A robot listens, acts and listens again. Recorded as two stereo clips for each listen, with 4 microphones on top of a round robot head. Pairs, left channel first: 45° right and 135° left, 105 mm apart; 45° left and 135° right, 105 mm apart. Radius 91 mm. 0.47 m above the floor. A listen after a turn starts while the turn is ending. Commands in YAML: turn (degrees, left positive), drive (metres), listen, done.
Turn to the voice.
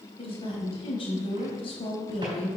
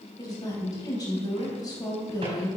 turn: -10
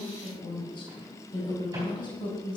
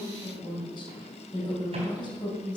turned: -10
done: "Facing the woman speaking, 2 to 4 m away."